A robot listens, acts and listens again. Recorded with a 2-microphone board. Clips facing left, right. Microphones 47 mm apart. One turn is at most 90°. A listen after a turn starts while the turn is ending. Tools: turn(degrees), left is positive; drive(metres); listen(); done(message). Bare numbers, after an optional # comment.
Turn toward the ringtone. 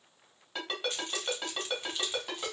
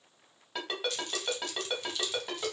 turn(-30)
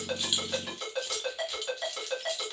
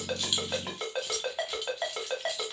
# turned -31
# So it is at 140° right.
turn(-90)
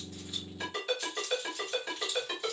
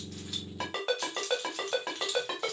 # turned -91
# The ringtone is now 50° right.
turn(-50)
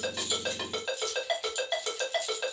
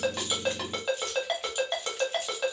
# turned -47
done("Found it: a ringtone, straight ahead, 1 to 2 m away.")